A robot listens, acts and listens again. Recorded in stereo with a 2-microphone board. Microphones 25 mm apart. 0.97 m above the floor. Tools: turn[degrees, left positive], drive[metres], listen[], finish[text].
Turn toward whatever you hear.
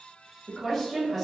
Action: turn[30]
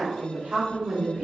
Thought: So it is at 45° right.
Action: turn[-45]
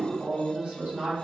Thought: The woman speaking is now 50° right.
Action: turn[-50]
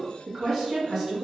Thought: The woman speaking is now 15° right.
Action: turn[-15]
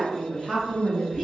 Action: finish[Facing the woman speaking, 1 to 2 m away.]